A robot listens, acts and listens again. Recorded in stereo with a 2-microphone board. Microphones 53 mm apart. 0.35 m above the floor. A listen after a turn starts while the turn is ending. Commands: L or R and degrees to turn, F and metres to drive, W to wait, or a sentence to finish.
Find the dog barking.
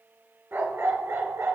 R60
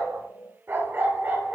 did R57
R35
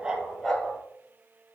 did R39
L10
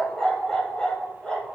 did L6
L15
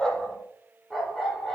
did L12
Facing the dog barking, 2 to 4 m away.